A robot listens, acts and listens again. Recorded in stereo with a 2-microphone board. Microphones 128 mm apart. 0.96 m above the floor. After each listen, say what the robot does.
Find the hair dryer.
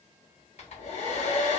Turn 60° left.
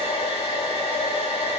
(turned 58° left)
Turn 50° left.
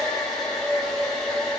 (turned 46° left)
Facing the hair dryer.